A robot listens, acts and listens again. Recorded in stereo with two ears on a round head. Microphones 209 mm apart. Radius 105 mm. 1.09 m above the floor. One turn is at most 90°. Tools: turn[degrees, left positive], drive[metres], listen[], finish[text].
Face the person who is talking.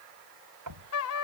Action: listen[]
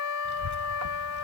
Thought: The child speaking: about 50° right or 130° right.
Action: turn[-50]
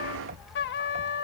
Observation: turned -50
Action: finish[Facing the child speaking.]